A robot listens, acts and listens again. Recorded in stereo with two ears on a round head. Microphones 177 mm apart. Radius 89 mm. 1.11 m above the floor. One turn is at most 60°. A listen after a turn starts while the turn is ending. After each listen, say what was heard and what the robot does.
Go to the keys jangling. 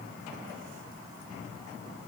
Keep listening.
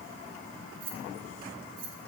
The keys jangling: about 50° right or 130° right. Turn 50° right.
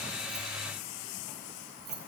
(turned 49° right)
So it is at 80° right. Turn 60° right.
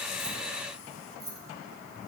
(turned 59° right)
The keys jangling is now 20° right. Turn 20° right.
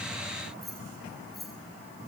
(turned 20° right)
Drive 1.0 m forward.
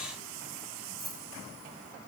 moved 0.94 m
Drive 1.0 m forward.
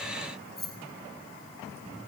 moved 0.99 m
Drive 1.0 m forward.
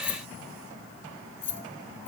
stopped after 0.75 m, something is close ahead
The keys jangling is now 10° left. Turn 10° left.
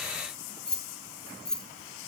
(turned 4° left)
Arrived at the keys jangling, straight ahead.